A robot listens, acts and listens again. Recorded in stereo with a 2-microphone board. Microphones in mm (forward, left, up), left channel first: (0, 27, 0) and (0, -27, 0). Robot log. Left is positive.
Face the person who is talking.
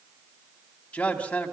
note: The man speaking: about 25° left or 155° left.
cmd yaw +25
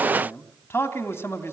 note: So it is at 130° left.
cmd yaw +130
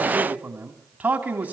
note: The man speaking is now 30° right.
cmd yaw -30
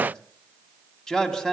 note: The man speaking is now 10° left.
cmd yaw +10
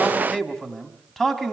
note: The man speaking is now 10° left.
cmd yaw +10
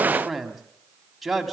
end: Found it: a man speaking, straight ahead.